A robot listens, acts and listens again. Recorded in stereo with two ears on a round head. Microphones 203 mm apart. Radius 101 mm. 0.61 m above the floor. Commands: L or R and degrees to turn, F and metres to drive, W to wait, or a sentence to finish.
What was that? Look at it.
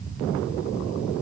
W
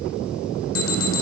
L65
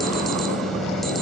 W
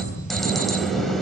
Found it: an alarm, straight ahead.